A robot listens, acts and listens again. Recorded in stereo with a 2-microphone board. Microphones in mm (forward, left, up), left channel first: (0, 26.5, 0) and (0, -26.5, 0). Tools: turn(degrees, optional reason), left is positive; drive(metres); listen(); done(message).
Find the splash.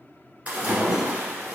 turn(degrees=-30, reason="The splash: about 30° right or 150° right.")
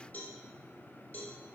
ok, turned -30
listen()
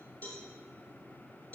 done("I heard a splash, but can't make it out now. It was about straight ahead or 120° right.")